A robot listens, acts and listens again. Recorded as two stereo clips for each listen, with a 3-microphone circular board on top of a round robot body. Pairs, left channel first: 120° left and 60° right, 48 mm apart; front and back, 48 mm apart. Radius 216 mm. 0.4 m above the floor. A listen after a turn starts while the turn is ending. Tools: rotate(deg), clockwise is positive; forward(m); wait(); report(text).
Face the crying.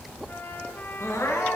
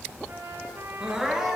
rotate(-100)
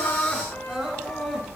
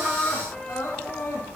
rotate(-20)
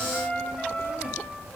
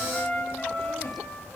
wait()
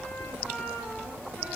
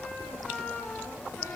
wait()
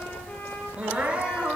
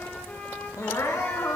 report("Facing the crying.")